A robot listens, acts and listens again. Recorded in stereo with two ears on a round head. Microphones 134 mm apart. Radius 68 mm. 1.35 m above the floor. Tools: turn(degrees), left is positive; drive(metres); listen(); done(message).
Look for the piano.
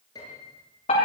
turn(degrees=25)
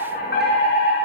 listen()
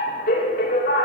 listen()
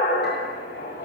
done("I heard a piano, but can't make it out now. It was about straight ahead or 130° left.")